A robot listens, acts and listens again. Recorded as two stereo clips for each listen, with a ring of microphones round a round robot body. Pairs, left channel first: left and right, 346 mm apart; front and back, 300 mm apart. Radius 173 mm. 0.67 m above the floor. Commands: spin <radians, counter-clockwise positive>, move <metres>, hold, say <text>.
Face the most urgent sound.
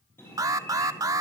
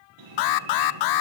spin -0.17
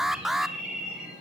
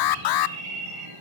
say Facing the alarm, under 1 m away.